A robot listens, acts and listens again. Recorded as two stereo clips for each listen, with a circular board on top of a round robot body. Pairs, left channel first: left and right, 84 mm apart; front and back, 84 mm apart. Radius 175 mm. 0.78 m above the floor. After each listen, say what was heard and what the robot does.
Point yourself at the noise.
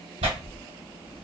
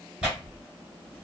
The tearing paper: 100° right. Turn 100° right.
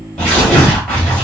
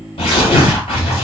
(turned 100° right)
Facing the tearing paper, 1 to 2 m away.